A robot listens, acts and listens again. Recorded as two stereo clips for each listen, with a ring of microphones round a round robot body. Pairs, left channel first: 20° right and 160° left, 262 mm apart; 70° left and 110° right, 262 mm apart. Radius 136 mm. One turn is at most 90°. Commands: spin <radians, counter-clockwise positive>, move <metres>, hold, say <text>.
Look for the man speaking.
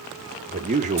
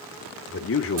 spin 1.57
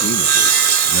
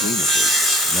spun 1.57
hold
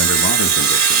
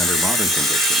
hold
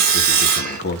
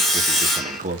spin -1.13
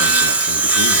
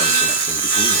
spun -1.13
hold
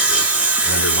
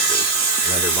hold
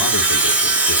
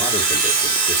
say I heard a man speaking from this way, but can't make it out now.